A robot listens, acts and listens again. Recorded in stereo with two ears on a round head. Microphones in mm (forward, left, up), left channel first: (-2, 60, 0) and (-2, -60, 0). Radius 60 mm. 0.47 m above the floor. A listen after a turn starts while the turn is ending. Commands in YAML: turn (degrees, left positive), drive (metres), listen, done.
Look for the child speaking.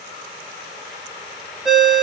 listen: true
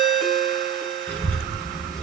turn: 30
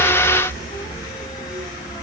turn: 15
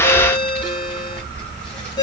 turn: 30
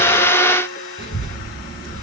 turn: 140
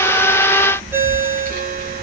turn: 10
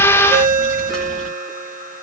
done: "Found it: a child speaking, straight ahead, 1 to 2 m away."